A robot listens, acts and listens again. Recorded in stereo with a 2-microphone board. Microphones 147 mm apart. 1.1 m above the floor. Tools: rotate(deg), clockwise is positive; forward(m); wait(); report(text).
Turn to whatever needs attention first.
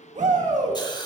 rotate(55)
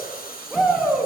report("Facing the shout, 1 to 2 m away.")